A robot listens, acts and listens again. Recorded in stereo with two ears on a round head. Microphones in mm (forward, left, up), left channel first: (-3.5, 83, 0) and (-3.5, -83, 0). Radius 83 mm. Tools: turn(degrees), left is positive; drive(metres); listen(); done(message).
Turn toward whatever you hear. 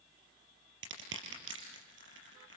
turn(degrees=-70)
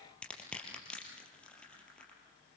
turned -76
done("Found it: crushing, straight ahead.")